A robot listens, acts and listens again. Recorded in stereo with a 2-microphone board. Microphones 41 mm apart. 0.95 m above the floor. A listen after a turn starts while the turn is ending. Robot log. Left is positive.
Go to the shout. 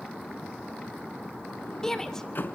cmd yaw +30
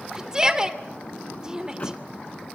note: So it is at 20° right.
cmd yaw -20
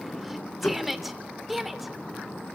cmd fwd 1.0
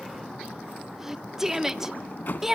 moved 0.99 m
note: The shout is now 15° right.
cmd yaw -15
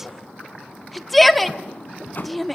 cmd fwd 1.0
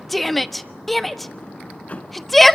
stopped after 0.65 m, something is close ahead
end: Arrived at the shout, straight ahead.